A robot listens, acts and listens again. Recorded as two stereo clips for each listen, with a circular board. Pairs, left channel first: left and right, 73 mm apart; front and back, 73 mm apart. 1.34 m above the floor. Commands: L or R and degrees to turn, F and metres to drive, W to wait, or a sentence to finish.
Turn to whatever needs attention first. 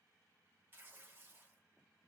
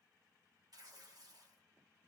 W
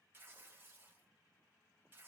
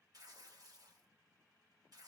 W
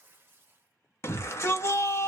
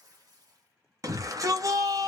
L140
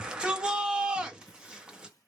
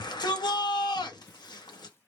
R15
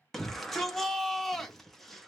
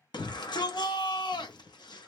Found it: a shout, straight ahead.